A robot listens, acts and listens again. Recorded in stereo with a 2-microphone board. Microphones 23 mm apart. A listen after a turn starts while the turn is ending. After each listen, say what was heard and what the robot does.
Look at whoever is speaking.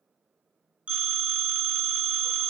Keep listening.
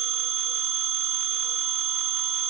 Keep listening.
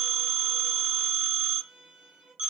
I can't make out anyone speaking to turn to.